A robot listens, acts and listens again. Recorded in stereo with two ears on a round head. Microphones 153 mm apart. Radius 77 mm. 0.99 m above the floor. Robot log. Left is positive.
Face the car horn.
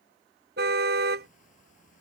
note: The car horn: about 65° right or 115° right.
cmd yaw -65
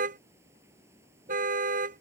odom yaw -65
note: So it is at 50° right.
cmd yaw -50
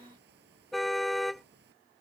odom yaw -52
end: Facing the car horn.